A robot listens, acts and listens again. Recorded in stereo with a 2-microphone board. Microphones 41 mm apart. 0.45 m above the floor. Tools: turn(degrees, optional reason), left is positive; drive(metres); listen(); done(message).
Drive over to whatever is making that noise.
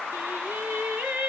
turn(degrees=-60, reason="The singing: about 60° right or 120° right.")
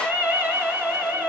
turn(degrees=-60, reason="So it is at 60° right.")
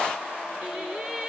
turn(degrees=-25, reason="The singing is now 25° right.")
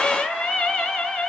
drive(metres=1.0)
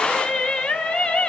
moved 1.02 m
turn(degrees=20, reason="The singing is now 20° left.")
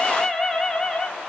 drive(metres=1.0)
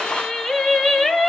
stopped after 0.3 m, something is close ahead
done("Arrived at the singing, straight ahead.")